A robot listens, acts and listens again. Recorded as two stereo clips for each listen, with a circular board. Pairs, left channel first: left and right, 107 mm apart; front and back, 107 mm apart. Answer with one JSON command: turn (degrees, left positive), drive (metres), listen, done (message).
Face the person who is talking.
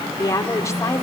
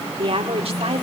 {"turn": 155}
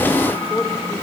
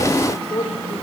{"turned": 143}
{"turn": 20}
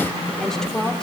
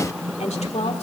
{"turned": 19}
{"done": "Facing the woman speaking."}